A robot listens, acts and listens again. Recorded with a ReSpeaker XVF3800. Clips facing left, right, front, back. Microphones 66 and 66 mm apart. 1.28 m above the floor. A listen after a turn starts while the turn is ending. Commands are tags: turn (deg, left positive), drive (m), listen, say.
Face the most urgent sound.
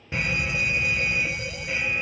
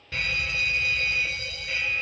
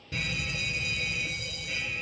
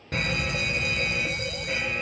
<turn deg="160"/>
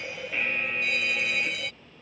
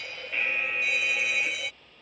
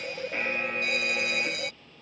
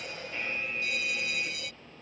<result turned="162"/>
<say>Facing the fire alarm.</say>